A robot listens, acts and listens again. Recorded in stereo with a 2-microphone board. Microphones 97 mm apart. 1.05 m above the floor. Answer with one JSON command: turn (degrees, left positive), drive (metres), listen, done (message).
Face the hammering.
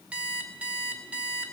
{"listen": true}
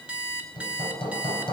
{"turn": 65}
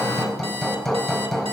{"done": "Found it: hammering, straight ahead, 2 to 4 m away."}